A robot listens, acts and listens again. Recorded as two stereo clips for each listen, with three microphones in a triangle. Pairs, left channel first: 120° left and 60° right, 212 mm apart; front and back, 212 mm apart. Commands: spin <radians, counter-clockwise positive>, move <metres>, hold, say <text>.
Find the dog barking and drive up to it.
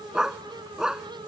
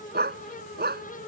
spin -2.53
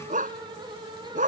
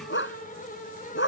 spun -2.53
spin -0.26
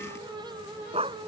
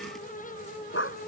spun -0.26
move 1.0
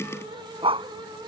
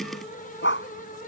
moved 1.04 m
move 1.0
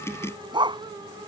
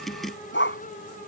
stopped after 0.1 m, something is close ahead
say Blocked. The dog barking is further on, straight ahead.